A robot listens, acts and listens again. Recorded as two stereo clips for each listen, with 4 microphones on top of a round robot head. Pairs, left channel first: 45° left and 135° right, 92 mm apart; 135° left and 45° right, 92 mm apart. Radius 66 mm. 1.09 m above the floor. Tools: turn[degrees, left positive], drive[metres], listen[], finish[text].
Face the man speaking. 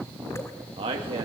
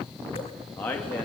Thought: The man speaking: 150° right.
Action: turn[-150]
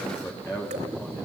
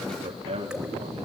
Thought: The man speaking is now 20° right.
Action: turn[-20]
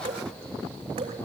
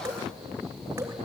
Action: listen[]
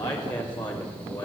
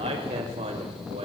Action: finish[Found it: a man speaking, straight ahead.]